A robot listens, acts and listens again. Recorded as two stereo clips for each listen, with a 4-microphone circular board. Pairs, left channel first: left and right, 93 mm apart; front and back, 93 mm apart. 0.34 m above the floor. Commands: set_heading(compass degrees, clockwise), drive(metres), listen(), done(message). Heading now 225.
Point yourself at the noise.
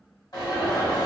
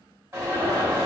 set_heading(105)
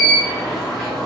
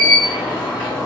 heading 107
done("Facing the alarm, 1 to 2 m away.")